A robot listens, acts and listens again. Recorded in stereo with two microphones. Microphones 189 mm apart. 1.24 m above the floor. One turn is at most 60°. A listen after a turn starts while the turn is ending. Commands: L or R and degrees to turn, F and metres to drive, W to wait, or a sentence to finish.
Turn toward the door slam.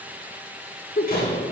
L55
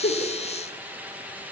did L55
W
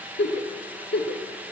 I heard a door slam, but can't make it out now. It was about straight ahead or 70° left.